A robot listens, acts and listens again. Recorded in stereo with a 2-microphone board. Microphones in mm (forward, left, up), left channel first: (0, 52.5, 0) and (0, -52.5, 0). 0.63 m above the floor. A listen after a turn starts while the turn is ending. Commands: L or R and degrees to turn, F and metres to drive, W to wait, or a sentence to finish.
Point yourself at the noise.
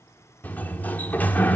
L15
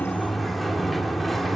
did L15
Facing the sliding door, 1 to 2 m away.